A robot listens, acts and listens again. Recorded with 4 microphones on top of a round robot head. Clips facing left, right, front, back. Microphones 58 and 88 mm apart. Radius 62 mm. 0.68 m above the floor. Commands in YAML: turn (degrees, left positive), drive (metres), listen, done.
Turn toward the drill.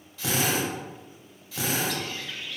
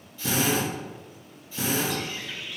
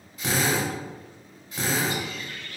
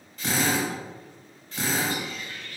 turn: 80
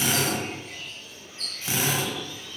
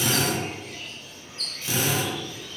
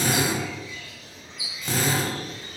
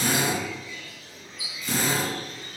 turn: 25
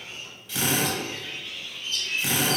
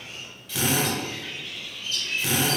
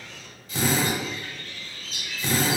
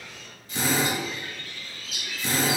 done: "Facing the drill."